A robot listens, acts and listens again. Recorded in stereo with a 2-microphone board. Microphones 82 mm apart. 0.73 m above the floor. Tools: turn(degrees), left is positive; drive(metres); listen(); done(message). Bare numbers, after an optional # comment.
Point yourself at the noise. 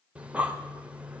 # The breathing: about 15° right or 165° right.
turn(-15)
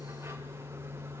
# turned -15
# So it is at 150° right.
turn(-150)
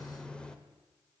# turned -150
# The breathing is now 10° left.
turn(10)
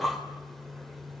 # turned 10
done("Found it: breathing, straight ahead.")